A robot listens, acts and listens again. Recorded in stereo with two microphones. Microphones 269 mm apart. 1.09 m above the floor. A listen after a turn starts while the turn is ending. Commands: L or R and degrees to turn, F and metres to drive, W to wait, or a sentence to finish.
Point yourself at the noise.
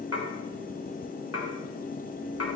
L60
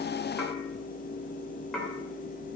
Facing the dishes clattering.